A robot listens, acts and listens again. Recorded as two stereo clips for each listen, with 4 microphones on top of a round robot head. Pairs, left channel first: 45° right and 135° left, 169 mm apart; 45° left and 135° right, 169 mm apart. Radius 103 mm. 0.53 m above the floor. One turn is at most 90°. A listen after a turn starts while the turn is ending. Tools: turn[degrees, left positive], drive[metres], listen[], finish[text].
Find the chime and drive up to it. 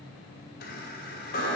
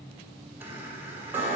Thought: The chime: 60° right.
Action: turn[-60]
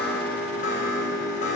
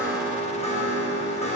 Action: drive[1.0]
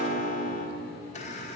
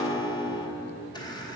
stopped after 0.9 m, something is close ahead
Thought: The chime is now 15° right.
Action: turn[-15]
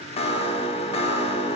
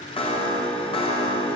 Action: finish[Arrived at the chime, straight ahead.]